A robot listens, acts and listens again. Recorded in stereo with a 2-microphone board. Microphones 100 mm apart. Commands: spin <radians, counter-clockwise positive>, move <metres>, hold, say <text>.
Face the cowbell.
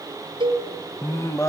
spin -0.87
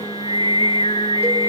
hold
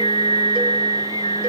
hold
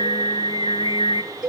spin -0.17
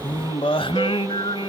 hold
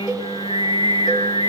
hold
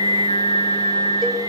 say Facing where the cowbell came from. I can't hear it now.